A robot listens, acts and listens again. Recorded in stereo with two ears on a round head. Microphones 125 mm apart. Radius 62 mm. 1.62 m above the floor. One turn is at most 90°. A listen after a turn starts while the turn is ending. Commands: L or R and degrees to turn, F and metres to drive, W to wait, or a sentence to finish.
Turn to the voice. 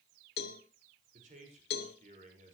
R55
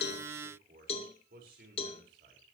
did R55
R70
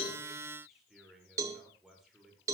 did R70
Found it: a man speaking, straight ahead.